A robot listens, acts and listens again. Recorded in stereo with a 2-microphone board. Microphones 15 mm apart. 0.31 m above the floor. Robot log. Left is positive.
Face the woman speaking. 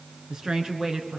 note: The woman speaking: about 55° right or 125° right.
cmd yaw -55
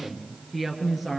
end: Facing the woman speaking.